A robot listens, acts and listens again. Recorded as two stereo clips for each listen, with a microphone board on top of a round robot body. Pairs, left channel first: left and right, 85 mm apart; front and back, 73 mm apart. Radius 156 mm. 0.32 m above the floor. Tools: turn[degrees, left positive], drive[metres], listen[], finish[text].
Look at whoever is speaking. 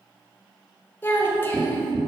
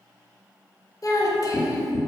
Thought: The child speaking: 30° left.
Action: turn[30]
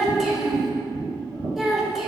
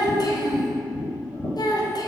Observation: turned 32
Action: finish[Found it: a child speaking, straight ahead, 1 to 2 m away.]